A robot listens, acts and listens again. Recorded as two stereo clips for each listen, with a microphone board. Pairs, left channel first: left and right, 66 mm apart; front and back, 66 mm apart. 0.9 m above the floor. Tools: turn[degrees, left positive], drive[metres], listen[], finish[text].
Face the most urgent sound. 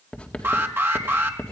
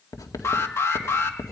Thought: The alarm: 40° right.
Action: turn[-40]
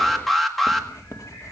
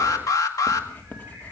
Action: finish[Facing the alarm.]